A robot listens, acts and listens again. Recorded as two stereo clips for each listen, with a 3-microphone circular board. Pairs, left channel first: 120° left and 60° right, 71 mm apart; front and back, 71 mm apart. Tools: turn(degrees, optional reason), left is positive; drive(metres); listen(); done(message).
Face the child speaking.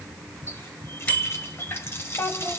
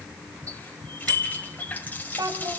turn(degrees=165, reason="The child speaking: 165° left.")
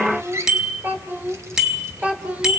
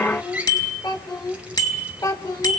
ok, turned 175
turn(degrees=10, reason="The child speaking is now 10° left.")
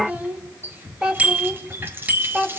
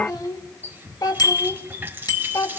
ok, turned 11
turn(degrees=20, reason="The child speaking is now 20° left.")
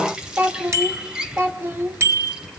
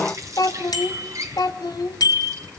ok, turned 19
done("Found it: a child speaking, straight ahead.")